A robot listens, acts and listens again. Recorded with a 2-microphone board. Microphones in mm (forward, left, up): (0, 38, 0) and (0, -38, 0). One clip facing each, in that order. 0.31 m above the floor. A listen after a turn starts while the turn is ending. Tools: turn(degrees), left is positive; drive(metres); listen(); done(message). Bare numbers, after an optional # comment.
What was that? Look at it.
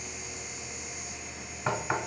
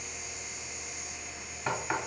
turn(30)
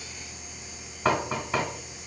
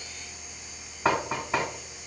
# So it is at 10° right.
turn(-10)
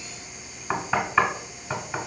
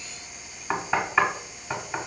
done("Found it: knocking, straight ahead.")